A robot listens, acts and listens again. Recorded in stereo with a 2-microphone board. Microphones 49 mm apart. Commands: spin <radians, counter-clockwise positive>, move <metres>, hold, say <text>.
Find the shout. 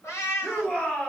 spin 0.44
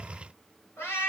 hold
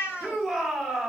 say Facing the shout.